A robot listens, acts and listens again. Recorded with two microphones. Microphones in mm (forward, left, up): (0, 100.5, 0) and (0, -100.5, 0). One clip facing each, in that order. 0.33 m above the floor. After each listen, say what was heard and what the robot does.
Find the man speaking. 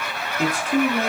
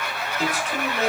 The man speaking: about 55° left or 125° left. Turn 55° left.
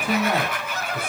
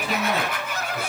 So it is at 55° left. Turn 55° left.
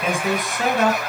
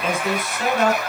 The man speaking is now 20° left. Turn 20° left.
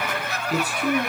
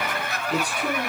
Found it: a man speaking, straight ahead, 2 to 4 m away.